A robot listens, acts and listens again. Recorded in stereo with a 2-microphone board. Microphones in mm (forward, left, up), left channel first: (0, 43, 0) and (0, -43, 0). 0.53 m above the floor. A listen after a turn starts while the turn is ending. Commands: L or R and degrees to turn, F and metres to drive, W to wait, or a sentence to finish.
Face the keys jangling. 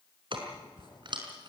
R60
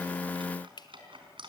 R70
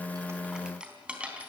R15
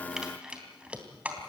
R15
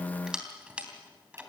R15
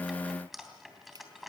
Found it: keys jangling, straight ahead.